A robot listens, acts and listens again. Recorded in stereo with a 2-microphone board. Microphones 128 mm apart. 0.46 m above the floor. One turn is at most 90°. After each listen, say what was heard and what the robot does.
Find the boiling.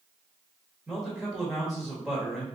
Keep listening.
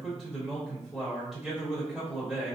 Keep listening.
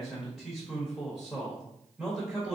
I can't make out boiling to turn to.